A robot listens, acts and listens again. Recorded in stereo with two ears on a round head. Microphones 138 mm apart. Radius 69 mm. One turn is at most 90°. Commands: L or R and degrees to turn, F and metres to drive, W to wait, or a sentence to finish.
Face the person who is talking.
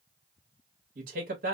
R60
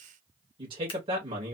R40
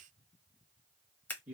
R10
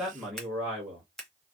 Facing the man speaking, 1 to 2 m away.